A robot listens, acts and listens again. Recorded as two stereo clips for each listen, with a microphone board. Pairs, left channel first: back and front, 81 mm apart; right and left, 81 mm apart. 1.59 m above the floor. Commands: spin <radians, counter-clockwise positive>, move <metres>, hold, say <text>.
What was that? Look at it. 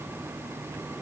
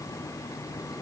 hold
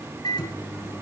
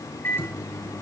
spin -2.71
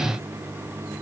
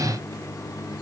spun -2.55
hold
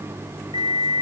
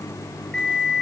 say Facing the microwave, 2 to 4 m away.